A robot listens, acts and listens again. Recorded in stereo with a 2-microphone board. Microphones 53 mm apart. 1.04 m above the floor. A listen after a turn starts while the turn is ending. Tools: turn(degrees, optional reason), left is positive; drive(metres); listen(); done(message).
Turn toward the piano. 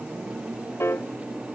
turn(degrees=55, reason="The piano: about 55° left or 125° left.")
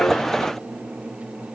listen()
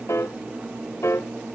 turn(degrees=65, reason="So it is at 65° left.")
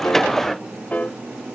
turn(degrees=30, reason="The piano is now 30° left.")
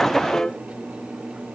turn(degrees=20, reason="The piano is now 20° left.")
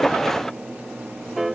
done("Facing the piano.")